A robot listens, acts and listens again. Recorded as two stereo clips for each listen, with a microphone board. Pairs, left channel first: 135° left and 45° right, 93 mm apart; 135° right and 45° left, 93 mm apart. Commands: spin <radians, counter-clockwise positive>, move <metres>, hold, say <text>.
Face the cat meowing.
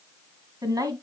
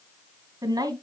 hold
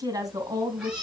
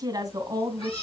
spin -2.18
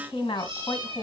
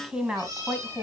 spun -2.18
spin -0.17
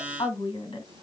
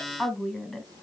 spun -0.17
say Found it: a cat meowing, straight ahead, over 4 m away.